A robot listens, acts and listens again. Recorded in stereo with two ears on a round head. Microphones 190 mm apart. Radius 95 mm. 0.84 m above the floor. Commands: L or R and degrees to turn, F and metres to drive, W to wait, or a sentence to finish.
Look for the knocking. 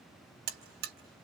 W
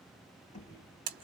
L35
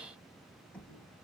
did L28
Found it: knocking, straight ahead.